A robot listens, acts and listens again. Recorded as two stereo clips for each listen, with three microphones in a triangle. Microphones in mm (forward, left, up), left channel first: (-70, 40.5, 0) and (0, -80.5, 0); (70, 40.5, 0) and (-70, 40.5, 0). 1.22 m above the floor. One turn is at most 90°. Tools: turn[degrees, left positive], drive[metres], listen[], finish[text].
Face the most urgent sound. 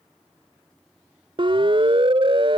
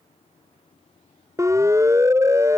Thought: The siren: 110° right.
Action: turn[-90]
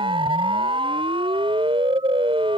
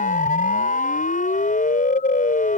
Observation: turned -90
Thought: The siren is now 10° right.
Action: turn[-10]
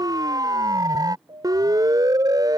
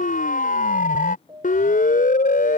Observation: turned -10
Action: finish[Facing the siren.]